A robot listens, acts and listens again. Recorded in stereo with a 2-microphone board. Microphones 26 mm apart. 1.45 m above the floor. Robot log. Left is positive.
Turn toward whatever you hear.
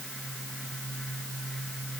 cmd idle
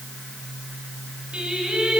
note: The singing: about 40° right or 140° right.
cmd yaw -40
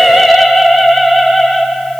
end: Found it: singing, straight ahead.